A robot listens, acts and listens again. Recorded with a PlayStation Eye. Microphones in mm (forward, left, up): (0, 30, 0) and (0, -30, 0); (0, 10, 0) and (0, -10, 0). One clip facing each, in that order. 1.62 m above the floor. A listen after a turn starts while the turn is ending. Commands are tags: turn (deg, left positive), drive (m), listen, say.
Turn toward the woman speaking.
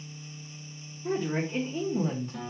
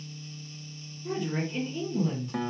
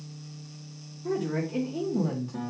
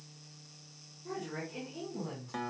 <turn deg="30"/>
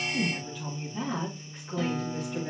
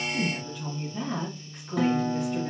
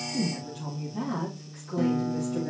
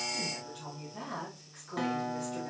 <turn deg="-10"/>
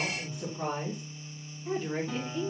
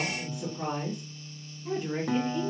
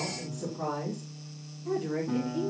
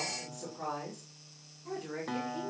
<turn deg="-10"/>
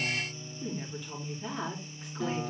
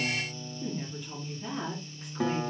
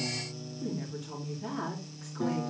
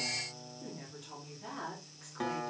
<say>Facing the woman speaking.</say>